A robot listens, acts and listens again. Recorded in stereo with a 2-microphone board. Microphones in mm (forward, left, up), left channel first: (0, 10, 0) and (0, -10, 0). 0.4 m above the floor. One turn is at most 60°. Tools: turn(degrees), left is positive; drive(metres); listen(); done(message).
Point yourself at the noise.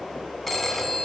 turn(degrees=30)
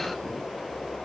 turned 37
listen()
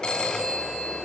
turn(degrees=60)
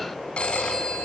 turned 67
turn(degrees=60)
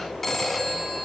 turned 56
turn(degrees=10)
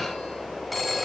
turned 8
done("Found it: a phone ringing, straight ahead.")